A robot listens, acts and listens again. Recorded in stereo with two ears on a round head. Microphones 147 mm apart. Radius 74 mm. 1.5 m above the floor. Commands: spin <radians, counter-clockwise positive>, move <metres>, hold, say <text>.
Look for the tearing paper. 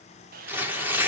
spin -0.52
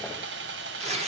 spin -2.44
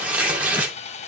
spin -0.17
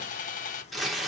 say Found it: tearing paper, straight ahead.